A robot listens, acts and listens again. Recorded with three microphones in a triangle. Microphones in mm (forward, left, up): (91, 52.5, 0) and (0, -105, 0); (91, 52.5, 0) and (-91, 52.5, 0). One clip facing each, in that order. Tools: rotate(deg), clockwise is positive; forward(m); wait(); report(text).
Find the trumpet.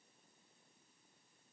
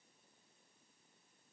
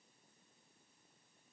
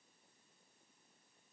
wait()
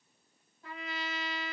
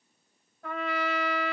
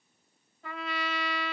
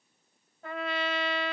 rotate(145)
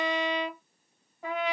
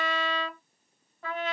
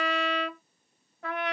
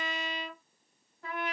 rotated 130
rotate(15)
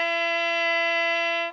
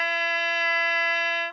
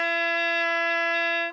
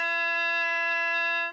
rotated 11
report("Found it: a trumpet, straight ahead.")